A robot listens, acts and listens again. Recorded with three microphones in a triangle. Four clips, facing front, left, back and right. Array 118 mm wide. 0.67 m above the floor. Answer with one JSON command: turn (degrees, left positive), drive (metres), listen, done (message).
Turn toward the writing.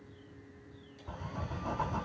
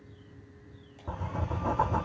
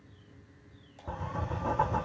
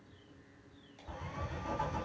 {"turn": 115}
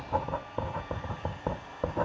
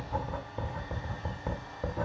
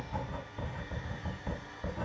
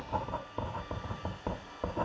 {"turn": -15}
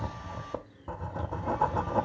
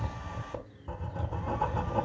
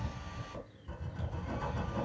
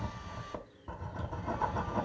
{"done": "Found it: writing, straight ahead."}